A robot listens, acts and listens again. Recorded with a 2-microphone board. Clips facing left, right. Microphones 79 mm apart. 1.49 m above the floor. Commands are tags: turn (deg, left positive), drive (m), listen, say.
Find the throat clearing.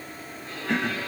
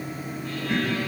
<turn deg="90"/>
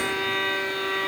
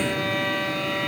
<listen/>
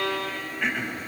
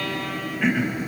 <say>Found it: throat clearing, straight ahead.</say>